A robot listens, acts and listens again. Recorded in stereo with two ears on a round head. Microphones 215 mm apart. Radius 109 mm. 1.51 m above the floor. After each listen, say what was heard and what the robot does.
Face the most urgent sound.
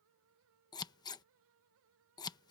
Keep listening.
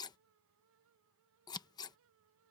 Keep listening.
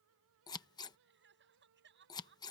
The crying: about 50° right or 130° right. Turn 50° right.
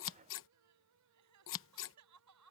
So it is at 80° right. Turn 80° right.
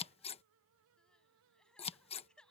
Found it: crying, straight ahead.